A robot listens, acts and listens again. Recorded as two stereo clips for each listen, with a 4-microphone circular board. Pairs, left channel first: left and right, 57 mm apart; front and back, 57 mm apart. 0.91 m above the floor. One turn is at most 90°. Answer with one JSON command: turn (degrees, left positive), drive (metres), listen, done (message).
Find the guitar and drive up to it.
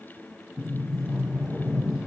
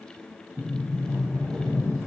{"listen": true}
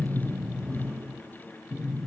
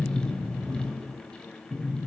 {"listen": true}
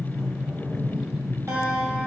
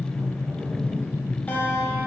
{"turn": -60}
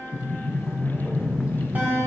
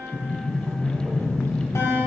{"turn": -35}
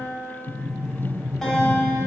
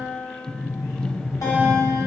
{"turn": 10}
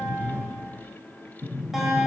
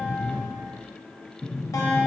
{"drive": 1.0}
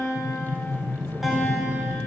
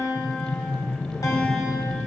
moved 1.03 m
{"drive": 1.0}
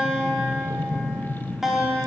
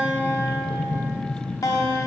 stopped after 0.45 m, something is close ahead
{"done": "I am next to the guitar."}